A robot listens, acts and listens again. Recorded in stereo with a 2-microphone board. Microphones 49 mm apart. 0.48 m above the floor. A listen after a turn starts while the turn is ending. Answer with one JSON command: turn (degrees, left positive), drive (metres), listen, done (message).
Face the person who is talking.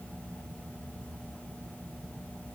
{"listen": true}
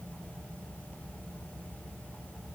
{"listen": true}
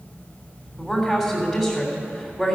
{"turn": 30}
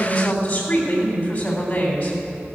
{"turn": 150}
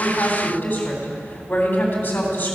{"turn": 60}
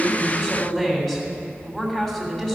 {"turn": 10}
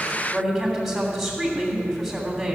{"done": "Found it: a woman speaking, straight ahead, 2 to 4 m away."}